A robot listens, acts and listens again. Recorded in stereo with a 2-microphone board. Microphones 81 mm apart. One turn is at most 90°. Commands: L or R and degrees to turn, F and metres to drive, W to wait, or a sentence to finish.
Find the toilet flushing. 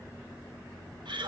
W
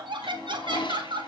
L90
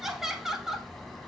W
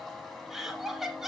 W
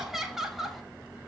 Facing where the toilet flushing came from. I can't hear it now.